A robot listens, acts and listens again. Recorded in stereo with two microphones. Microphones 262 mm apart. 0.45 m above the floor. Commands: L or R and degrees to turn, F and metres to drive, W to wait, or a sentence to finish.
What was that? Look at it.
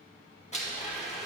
L25
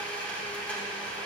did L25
Found it: a blender, straight ahead.